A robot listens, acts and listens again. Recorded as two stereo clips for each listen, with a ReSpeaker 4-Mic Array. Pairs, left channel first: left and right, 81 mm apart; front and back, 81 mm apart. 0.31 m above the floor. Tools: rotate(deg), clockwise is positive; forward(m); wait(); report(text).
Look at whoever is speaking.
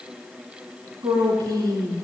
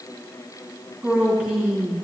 rotate(105)
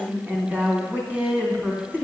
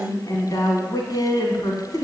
rotate(25)
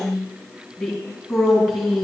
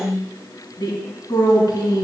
report("Found it: a woman speaking, straight ahead.")